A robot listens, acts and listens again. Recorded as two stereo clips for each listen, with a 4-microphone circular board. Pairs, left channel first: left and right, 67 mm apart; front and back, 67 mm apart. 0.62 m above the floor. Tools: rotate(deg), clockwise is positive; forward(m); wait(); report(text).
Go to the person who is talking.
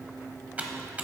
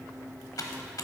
wait()
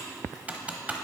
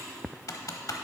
wait()
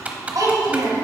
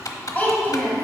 rotate(65)
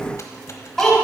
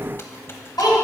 forward(1.0)
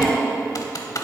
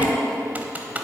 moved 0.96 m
rotate(-10)
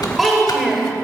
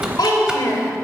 forward(1.0)
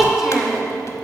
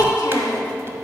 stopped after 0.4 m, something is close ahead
report("I am next to the child speaking.")